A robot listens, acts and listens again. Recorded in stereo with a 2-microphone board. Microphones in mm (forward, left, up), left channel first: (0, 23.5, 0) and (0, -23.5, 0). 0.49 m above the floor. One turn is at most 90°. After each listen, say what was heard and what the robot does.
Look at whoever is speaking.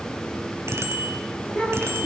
The child speaking: about 30° left or 150° left. Turn 30° left.
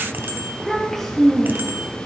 So it is at 10° left. Turn 10° left.
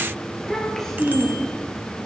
The child speaking is now 10° left. Turn 10° left.
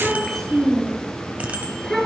The child speaking is now 10° left. Turn 10° left.
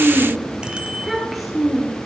Found it: a child speaking, straight ahead, over 4 m away.